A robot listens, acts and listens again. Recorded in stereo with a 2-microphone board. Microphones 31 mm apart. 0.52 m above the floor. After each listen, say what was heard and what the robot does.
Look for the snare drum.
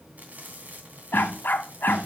The snare drum: about 60° right or 120° right. Turn 60° right.
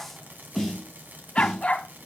Found it: a snare drum, straight ahead, over 4 m away.